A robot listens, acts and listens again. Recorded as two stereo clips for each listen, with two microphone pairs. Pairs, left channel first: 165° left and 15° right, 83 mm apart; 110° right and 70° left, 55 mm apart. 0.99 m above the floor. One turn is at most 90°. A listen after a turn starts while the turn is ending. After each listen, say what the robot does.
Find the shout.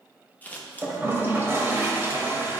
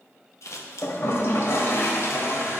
Keep listening.
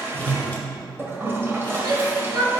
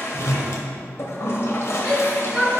Found it: a shout, straight ahead, 2 to 4 m away.